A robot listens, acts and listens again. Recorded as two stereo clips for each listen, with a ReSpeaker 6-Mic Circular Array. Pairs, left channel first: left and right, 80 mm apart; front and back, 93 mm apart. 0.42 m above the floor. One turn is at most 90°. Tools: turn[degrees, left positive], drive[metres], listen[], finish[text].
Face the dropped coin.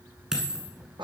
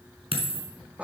Thought: The dropped coin: 170° right.
Action: turn[-90]
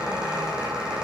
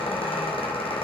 Thought: Nothing new. It was at 80° right.
Action: turn[-80]
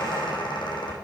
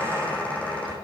Action: finish[I heard a dropped coin from this way, but can't make it out now.]